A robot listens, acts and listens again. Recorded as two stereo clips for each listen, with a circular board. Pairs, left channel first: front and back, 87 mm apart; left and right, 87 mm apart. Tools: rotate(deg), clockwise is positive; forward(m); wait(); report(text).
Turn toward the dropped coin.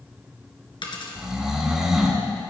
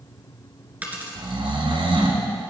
rotate(20)
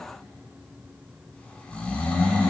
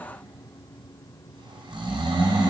report("Facing where the dropped coin came from. I can't hear it now.")